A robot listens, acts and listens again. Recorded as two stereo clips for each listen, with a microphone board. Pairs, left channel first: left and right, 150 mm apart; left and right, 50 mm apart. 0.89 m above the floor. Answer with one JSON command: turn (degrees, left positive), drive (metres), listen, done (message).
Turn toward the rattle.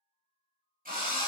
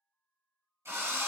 {"listen": true}
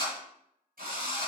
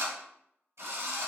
{"listen": true}
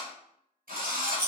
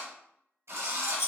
{"turn": 65}
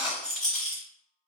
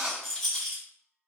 {"done": "Found it: a rattle, straight ahead, 1 to 2 m away."}